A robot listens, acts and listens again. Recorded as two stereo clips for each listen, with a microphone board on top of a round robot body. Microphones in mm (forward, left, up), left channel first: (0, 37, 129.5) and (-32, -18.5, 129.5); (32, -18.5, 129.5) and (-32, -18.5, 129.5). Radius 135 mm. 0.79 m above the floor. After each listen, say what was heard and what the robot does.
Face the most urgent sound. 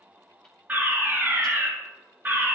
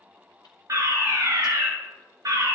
The fire alarm: straight behind. Turn 180° left.
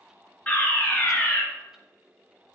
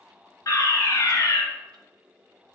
Found it: a fire alarm, straight ahead, 2 to 4 m away.